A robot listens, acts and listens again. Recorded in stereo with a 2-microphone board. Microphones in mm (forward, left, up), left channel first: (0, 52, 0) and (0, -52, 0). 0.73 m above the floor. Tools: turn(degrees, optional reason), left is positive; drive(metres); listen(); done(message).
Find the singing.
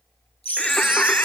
turn(degrees=15, reason="The singing: about 15° left or 165° left.")
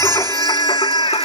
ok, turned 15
turn(degrees=120, reason="So it is at 120° left.")
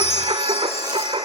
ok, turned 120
turn(degrees=-65, reason="The singing is now 65° right.")
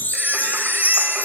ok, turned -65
listen()
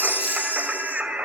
turn(degrees=-10, reason="The singing is now 10° right.")
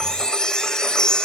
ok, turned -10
listen()
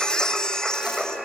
done("Found it: singing, straight ahead.")